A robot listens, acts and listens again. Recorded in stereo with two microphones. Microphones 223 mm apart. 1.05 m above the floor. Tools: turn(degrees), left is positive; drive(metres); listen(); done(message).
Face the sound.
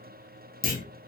turn(degrees=40)
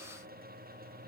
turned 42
listen()
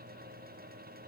done("I heard a clunk, but can't make it out now. It was about 5° right or 100° left.")